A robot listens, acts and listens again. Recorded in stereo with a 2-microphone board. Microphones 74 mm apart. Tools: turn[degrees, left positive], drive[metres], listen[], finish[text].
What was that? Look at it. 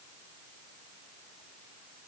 Action: listen[]
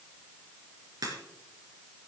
Thought: The crack: about 65° right or 115° right.
Action: turn[-65]
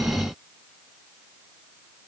Action: listen[]
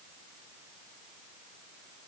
Action: finish[I heard a crack, but can't make it out now. It was about straight ahead or 50° right.]